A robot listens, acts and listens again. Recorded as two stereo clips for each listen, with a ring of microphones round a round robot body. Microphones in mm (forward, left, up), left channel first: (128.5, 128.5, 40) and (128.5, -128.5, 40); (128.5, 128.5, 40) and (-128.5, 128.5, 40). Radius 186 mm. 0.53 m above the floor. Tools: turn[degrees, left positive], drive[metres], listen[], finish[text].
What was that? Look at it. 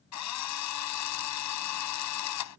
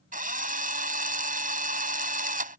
Thought: The drill: 120° left.
Action: turn[120]
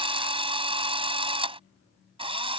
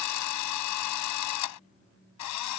Thought: The drill is now 20° right.
Action: turn[-20]
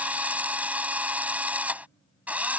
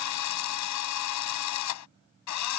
Action: finish[Found it: a drill, straight ahead.]